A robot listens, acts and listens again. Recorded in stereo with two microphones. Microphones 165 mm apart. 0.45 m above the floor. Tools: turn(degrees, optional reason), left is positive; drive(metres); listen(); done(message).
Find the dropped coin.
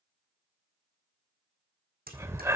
turn(degrees=-65, reason="The dropped coin: about 65° right or 115° right.")
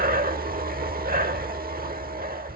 listen()
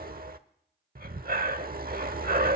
done("I heard a dropped coin, but can't make it out now. It was about straight ahead or 50° right.")